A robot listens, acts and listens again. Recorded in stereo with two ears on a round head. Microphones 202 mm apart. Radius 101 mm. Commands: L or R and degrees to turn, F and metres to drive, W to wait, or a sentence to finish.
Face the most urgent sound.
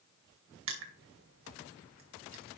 W
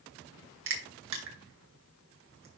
W
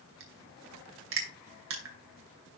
I can't make out anything urgent, only crushing.